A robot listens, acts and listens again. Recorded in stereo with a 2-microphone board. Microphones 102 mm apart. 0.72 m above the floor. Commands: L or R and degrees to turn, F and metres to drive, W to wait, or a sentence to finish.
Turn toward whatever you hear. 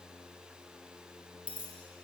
R30
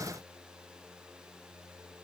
W
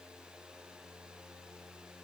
I heard a dropped coin, but can't make it out now. It was about 15° left or 135° right.